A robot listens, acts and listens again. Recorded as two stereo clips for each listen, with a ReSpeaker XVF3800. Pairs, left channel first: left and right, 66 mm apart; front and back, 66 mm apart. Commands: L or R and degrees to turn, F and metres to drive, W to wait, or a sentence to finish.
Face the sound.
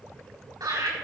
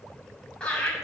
R75
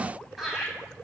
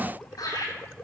Found it: laughter, straight ahead, over 4 m away.